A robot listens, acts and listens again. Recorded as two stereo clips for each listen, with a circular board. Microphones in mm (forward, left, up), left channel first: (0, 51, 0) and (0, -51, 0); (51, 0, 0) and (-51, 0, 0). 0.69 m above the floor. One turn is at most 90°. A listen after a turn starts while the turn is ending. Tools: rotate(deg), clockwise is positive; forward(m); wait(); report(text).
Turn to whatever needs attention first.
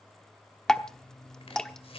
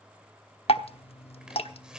wait()
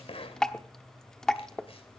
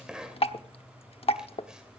wait()
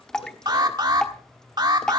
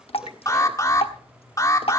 rotate(50)
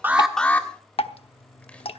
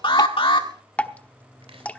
rotate(-15)
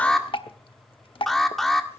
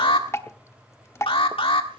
report("Facing the alarm.")